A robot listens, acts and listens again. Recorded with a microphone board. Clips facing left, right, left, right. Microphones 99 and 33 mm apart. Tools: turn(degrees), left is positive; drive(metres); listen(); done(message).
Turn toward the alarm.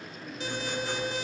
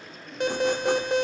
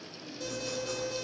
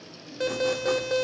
turn(degrees=-60)
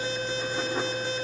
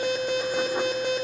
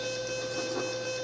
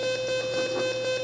turn(degrees=-60)
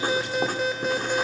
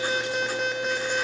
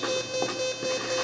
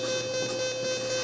done("Found it: an alarm, straight ahead.")